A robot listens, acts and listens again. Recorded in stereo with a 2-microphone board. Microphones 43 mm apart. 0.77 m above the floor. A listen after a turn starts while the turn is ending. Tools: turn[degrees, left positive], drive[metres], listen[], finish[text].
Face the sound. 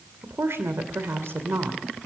Thought: The woman speaking: about 65° right or 115° right.
Action: turn[-65]
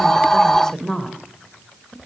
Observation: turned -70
Thought: So it is at 25° left.
Action: turn[25]
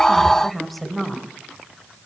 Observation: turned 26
Action: finish[Facing the woman speaking, 2 to 4 m away.]